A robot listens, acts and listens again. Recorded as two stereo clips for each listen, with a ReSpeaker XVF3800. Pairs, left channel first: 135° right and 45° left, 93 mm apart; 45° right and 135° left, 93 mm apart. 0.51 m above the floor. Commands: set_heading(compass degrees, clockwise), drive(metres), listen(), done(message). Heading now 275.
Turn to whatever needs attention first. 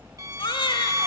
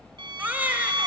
set_heading(70)
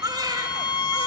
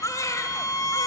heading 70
done("Found it: a baby crying, straight ahead.")